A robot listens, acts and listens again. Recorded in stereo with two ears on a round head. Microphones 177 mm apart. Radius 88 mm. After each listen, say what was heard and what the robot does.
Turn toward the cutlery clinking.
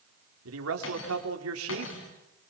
The cutlery clinking: about 70° left or 110° left. Turn 70° left.
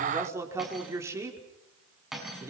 Found it: cutlery clinking, straight ahead.